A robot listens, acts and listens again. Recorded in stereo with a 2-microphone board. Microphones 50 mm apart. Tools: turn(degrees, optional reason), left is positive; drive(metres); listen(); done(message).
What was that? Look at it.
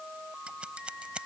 turn(degrees=-20, reason="The scissors: about 20° right or 160° right.")
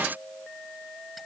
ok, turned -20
listen()
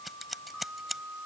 done("Facing the scissors.")